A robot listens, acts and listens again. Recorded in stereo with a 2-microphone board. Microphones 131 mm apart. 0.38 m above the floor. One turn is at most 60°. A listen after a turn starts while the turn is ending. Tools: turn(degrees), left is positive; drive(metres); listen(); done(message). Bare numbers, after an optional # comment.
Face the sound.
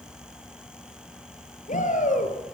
turn(60)
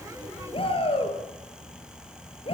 # So it is at 45° left.
turn(45)
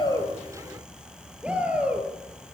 # The shout is now 10° right.
turn(-10)
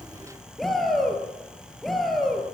done("Facing the shout.")